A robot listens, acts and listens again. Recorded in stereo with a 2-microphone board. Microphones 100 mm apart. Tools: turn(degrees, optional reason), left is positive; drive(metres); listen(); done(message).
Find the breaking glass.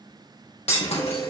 turn(degrees=90)
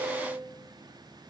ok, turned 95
done("I heard breaking glass from this way, but can't make it out now.")